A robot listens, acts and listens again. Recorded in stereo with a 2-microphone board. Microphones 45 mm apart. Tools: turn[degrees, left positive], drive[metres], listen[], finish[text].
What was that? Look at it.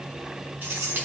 Thought: The keys jangling: about 45° right or 135° right.
Action: turn[-45]
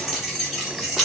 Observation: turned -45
Action: finish[Facing the keys jangling, 2 to 4 m away.]